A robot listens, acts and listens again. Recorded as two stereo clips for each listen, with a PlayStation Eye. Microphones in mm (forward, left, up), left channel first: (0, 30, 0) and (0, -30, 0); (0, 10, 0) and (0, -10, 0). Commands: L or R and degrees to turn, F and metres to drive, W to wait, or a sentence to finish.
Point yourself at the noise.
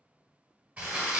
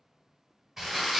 R25
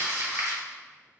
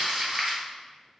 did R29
R125
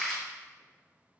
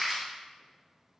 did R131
L10
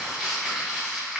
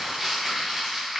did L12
Facing the crumpling, 1 to 2 m away.